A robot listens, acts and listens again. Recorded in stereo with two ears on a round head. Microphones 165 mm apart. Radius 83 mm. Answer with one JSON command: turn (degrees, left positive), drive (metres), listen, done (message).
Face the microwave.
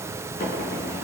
{"listen": true}
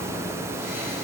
{"listen": true}
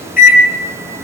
{"turn": 50}
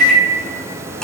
{"done": "Found it: a microwave, straight ahead."}